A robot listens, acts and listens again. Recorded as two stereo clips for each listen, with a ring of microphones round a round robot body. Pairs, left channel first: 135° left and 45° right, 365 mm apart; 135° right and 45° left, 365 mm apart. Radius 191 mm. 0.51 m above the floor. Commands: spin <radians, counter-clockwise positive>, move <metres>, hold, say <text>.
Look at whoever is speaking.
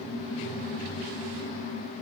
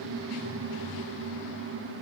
hold
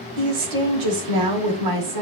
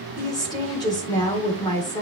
spin -1.05
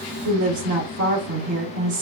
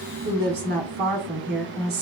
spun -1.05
spin -0.26
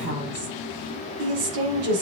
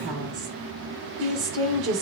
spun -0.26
say Facing the woman speaking, 2 to 4 m away.